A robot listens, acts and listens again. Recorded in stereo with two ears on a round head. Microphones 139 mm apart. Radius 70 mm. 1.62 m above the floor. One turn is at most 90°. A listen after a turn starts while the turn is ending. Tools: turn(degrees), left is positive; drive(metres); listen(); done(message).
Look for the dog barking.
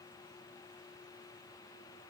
listen()
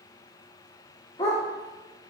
turn(degrees=25)
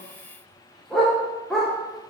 done("Facing the dog barking.")